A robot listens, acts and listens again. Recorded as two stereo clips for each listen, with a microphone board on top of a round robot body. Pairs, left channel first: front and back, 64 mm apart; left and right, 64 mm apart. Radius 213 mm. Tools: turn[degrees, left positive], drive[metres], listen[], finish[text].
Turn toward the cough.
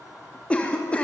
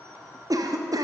Thought: The cough: 70° right.
Action: turn[-70]
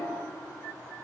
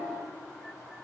Action: listen[]
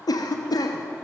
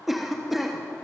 Action: finish[Facing the cough.]